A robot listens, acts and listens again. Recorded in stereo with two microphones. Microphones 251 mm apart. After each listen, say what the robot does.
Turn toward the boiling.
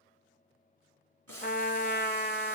Turn 90° right.
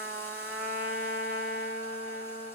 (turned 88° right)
Keep listening.
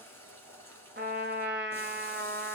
Turn 10° left.
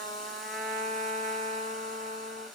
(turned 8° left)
Found it: boiling, straight ahead.